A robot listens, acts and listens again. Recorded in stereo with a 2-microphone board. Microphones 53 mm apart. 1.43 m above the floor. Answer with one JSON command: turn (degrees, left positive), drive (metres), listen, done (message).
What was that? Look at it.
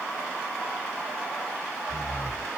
{"turn": 90}
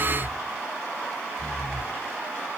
{"done": "Facing the breathing."}